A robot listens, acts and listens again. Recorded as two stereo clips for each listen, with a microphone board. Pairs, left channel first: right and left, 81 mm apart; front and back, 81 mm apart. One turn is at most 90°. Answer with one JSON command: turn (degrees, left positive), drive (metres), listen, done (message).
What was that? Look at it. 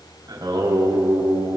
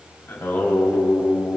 {"turn": 70}
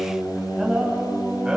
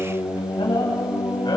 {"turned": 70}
{"turn": 15}
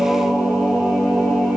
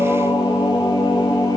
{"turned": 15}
{"done": "Facing the singing, over 4 m away."}